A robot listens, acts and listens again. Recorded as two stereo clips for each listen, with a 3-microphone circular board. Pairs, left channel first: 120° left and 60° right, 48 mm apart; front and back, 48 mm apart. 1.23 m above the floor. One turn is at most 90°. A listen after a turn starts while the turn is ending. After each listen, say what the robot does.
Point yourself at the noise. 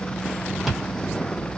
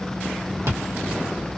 Turn 90° right.
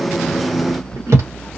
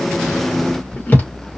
Turn 55° right.
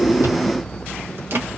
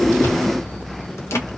Keep listening.
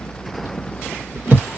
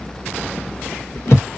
Turn 20° right.
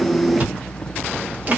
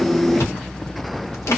Found it: chewing, straight ahead.